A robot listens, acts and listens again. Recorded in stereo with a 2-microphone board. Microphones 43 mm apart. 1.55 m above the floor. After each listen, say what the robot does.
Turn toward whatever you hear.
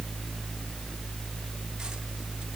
Keep listening.
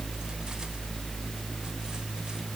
Keep listening.
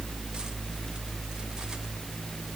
I can't make out anything to turn to.